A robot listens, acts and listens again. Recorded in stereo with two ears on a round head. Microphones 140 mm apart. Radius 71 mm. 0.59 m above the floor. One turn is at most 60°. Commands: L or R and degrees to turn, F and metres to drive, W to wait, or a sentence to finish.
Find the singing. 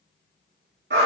W
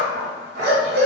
W
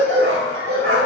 I can't make out singing to turn to.